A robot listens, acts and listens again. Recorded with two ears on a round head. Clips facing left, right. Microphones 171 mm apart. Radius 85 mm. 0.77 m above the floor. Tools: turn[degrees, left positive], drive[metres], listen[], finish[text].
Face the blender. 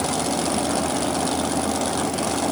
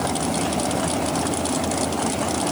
Action: listen[]
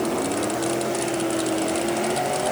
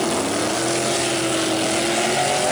Action: listen[]
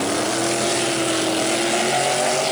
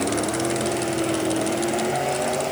Action: finish[I can't make out a blender.]